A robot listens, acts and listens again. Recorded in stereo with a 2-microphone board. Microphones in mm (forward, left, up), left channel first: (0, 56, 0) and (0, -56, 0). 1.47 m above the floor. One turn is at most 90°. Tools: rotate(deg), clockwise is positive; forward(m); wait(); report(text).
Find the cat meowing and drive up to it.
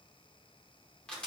wait()
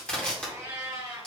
rotate(40)
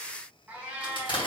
rotate(10)
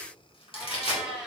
forward(1.0)
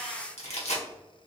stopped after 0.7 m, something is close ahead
wait()
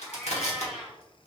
report("Arrived at the cat meowing, straight ahead.")